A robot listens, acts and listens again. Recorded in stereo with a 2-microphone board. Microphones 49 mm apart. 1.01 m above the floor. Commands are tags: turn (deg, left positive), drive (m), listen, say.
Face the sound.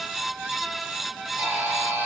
<turn deg="-55"/>
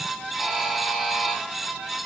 <say>Found it: a buzzer, straight ahead, 2 to 4 m away.</say>